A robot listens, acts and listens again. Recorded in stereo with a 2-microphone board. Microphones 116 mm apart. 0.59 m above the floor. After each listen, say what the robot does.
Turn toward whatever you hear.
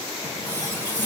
Turn 20° left.
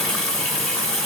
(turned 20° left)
Facing the running tap, 1 to 2 m away.